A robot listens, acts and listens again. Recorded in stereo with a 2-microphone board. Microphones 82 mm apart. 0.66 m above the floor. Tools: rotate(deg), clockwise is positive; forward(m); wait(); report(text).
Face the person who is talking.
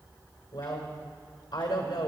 rotate(-70)
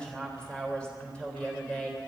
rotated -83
rotate(-10)
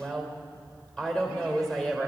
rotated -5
report("Facing the woman speaking.")